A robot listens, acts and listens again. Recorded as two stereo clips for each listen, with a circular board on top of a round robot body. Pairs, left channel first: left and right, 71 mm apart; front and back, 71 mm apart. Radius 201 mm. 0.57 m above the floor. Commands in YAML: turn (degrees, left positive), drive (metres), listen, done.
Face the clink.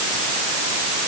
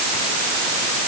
listen: true
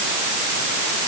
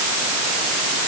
listen: true
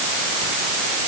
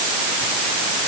done: "I can't make out a clink."